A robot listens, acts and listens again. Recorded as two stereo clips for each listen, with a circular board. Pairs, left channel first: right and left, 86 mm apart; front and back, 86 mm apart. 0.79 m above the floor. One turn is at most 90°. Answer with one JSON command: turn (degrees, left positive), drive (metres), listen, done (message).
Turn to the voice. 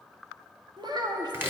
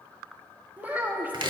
{"turn": 90}
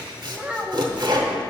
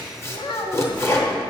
{"turn": 15}
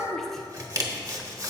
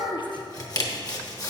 {"done": "Facing the child speaking."}